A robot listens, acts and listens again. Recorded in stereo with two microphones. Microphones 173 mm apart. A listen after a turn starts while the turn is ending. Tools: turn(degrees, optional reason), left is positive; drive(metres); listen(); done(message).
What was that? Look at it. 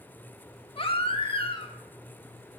turn(degrees=30, reason="The baby crying: about 30° left or 150° left.")
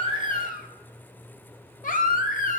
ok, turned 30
turn(degrees=115, reason="So it is at 115° left.")
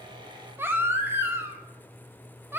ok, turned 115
turn(degrees=-15, reason="The baby crying is now 15° right.")
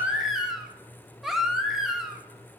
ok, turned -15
done("Facing the baby crying, under 1 m away.")